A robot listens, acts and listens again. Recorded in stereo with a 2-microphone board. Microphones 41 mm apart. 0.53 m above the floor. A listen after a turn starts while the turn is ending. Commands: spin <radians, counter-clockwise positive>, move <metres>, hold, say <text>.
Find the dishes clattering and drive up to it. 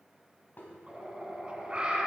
spin 0.79
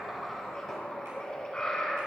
hold
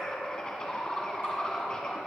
hold
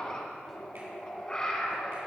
say I heard dishes clattering, but can't make it out now. It was about straight ahead or 90° left. I did not reach it.